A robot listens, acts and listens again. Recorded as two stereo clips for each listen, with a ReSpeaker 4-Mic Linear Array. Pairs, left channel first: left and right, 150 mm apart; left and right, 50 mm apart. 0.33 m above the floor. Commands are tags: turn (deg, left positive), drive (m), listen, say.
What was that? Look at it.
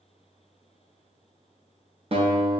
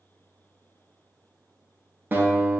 <turn deg="-45"/>
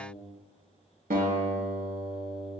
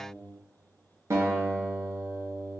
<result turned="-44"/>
<turn deg="-90"/>
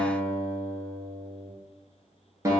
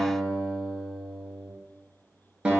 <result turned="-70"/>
<turn deg="-20"/>
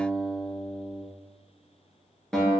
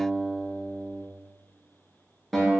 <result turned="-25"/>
<say>Facing the guitar, under 1 m away.</say>